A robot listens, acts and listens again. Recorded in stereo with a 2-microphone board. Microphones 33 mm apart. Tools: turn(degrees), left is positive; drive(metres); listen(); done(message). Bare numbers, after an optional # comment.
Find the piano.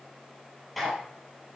listen()
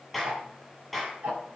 listen()
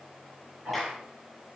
done("I can't make out a piano to turn to.")